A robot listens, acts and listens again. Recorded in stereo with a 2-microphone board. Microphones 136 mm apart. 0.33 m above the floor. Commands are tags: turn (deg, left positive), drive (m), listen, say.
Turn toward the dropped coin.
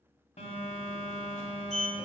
<listen/>
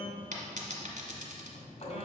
<turn deg="-75"/>
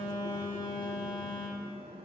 <listen/>
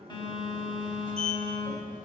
<say>I heard a dropped coin, but can't make it out now. It was about straight ahead or 30° right.</say>